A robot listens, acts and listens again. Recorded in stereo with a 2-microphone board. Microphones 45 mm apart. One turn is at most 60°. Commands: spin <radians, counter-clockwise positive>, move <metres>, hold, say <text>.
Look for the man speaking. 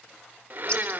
hold
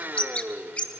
hold
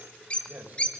spin -0.79
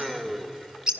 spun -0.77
hold
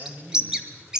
spin -1.05
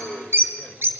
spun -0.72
spin -0.87
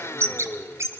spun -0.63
spin -0.26
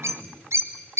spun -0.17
say Facing the man speaking, 2 to 4 m away.